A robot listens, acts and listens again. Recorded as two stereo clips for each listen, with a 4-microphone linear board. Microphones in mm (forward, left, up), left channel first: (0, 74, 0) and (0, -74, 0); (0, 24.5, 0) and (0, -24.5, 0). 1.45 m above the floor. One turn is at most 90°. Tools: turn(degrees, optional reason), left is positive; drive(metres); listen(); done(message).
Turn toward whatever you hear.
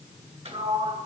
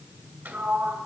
turn(degrees=-45, reason="The sliding door: about 45° right or 135° right.")
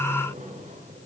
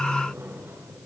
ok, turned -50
turn(degrees=-75, reason="So it is at 75° right.")
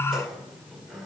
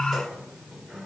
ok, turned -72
done("Facing the sliding door, 1 to 2 m away.")